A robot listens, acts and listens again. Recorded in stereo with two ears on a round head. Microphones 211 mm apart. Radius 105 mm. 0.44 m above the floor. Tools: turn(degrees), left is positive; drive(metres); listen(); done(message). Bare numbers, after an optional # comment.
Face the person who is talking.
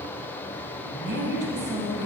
# The woman speaking: about 50° right or 130° right.
turn(-50)
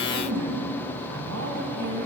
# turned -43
# So it is at 80° right.
turn(-80)
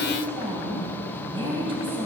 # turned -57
# The woman speaking is now 25° right.
turn(-25)
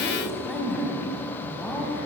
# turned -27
done("Found it: a woman speaking, straight ahead, 2 to 4 m away.")